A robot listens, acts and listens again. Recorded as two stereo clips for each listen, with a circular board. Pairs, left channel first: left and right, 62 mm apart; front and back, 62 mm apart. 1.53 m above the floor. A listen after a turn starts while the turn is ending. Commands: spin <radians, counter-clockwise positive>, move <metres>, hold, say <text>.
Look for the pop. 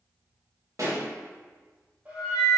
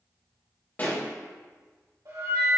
spin -1.05
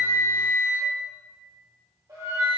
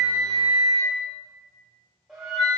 say I heard a pop from this way, but can't make it out now.